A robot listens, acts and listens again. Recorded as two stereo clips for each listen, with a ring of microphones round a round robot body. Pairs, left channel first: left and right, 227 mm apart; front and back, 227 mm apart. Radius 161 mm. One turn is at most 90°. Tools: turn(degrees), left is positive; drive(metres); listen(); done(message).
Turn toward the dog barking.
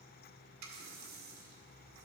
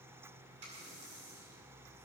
listen()
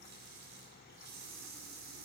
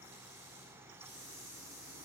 listen()
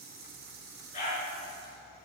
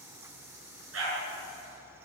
turn(degrees=90)
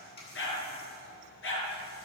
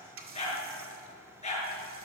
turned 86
turn(degrees=60)
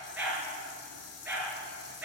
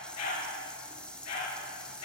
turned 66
done("Found it: a dog barking, straight ahead, over 4 m away.")